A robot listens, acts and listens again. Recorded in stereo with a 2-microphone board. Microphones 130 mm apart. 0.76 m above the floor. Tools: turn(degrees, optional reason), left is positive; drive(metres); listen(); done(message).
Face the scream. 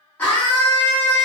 turn(degrees=30)
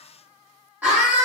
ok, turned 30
turn(degrees=-15, reason="So it is at 15° right.")
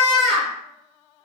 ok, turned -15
done("Facing the scream.")